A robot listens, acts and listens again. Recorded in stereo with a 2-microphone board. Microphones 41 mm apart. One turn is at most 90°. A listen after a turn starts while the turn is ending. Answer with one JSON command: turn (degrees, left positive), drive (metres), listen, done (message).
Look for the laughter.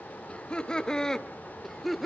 {"turn": 30}
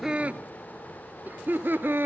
{"turn": -60}
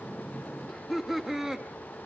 {"turn": -10}
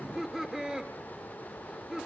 {"turn": -15}
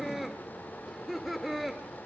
{"done": "Found it: laughter, straight ahead."}